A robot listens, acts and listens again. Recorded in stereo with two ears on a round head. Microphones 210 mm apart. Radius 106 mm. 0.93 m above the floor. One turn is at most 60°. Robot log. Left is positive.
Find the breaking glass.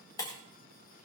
note: The breaking glass: about 20° left or 160° left.
cmd yaw +20
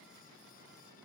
cmd idle
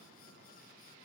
end: I heard breaking glass, but can't make it out now. It was about straight ahead or 140° left.